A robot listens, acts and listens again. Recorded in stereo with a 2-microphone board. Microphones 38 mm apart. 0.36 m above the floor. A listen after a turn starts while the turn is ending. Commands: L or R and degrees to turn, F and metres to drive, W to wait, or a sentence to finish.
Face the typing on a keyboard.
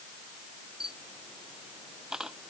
W
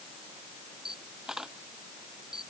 W
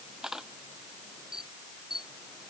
I can't make out typing on a keyboard, only a camera shutter.